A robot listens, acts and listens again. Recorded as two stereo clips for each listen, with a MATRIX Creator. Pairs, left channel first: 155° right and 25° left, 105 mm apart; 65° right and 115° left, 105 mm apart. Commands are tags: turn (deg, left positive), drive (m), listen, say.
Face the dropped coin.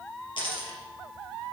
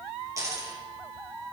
<turn deg="170"/>
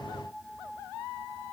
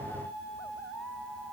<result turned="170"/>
<say>Facing where the dropped coin came from. I can't hear it now.</say>